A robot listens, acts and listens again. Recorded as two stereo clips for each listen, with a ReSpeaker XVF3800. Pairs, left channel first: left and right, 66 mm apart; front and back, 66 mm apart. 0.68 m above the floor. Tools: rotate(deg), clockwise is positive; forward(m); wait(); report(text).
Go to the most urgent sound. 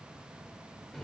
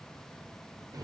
wait()
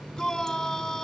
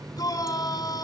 forward(1.0)
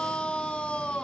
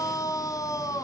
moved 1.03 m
rotate(-15)
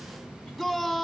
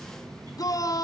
forward(1.0)
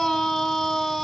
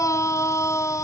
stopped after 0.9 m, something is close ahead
report("Arrived at the shout, straight ahead.")